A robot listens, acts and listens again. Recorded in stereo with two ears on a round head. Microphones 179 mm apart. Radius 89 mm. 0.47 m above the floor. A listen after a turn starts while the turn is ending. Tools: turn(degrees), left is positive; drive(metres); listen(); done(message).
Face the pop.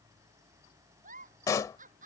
turn(degrees=15)
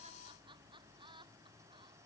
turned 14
listen()
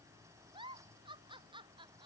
done("I heard a pop, but can't make it out now. It was about 5° left or 150° left.")